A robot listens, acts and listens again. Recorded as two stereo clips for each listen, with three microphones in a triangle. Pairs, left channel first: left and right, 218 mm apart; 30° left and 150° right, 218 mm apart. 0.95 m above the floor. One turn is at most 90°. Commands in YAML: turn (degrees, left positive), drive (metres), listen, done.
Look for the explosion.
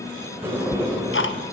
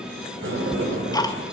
listen: true
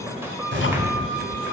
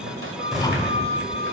turn: -65
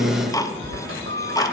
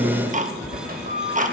done: "I heard an explosion from this way, but can't make it out now."